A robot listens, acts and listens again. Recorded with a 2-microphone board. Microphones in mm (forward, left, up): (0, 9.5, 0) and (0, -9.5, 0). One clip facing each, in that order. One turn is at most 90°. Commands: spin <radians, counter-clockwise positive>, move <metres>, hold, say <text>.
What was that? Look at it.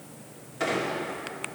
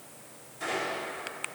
spin 0.61
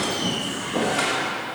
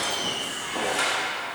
say Facing the squeak.